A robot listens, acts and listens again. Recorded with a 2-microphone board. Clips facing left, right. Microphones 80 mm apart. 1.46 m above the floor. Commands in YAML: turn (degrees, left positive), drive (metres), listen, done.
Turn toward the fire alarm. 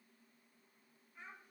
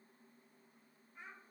listen: true
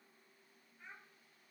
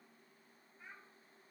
listen: true
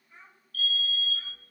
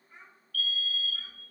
turn: 40
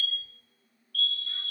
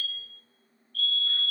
turn: 95
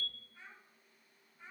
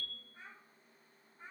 done: "Facing the fire alarm."